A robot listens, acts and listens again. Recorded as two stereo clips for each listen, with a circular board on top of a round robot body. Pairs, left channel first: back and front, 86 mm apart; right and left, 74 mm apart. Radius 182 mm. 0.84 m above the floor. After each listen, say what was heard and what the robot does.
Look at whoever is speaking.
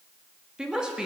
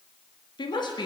The woman speaking: 80° right. Turn 80° right.
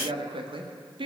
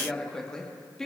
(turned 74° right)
The woman speaking is now 10° right. Turn 10° right.
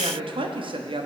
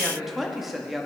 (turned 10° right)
Facing the woman speaking, 1 to 2 m away.